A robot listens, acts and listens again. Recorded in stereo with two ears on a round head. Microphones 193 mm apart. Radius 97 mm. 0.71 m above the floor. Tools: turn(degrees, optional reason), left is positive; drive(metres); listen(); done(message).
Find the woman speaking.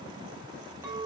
listen()
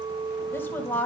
turn(degrees=30)
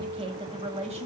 turn(degrees=-30, reason="So it is at 30° right.")
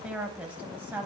turn(degrees=-10, reason="The woman speaking is now 10° right.")
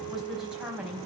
done("Found it: a woman speaking, straight ahead, 2 to 4 m away.")